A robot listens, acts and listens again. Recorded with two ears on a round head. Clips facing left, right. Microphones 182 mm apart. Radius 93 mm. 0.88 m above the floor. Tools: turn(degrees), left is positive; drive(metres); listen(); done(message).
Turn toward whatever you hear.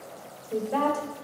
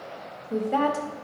turn(degrees=-25)
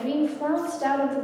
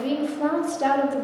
turn(degrees=-125)
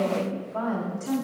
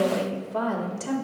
turn(degrees=-40)
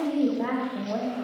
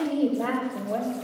done("Found it: a woman speaking, straight ahead, 1 to 2 m away.")